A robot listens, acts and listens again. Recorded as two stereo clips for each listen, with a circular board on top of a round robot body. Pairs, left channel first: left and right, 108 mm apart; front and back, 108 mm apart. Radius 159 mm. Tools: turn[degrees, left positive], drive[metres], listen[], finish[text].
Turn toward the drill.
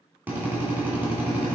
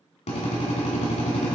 Thought: The drill: 15° right.
Action: turn[-15]
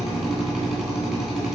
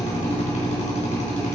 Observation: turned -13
Action: finish[Facing the drill.]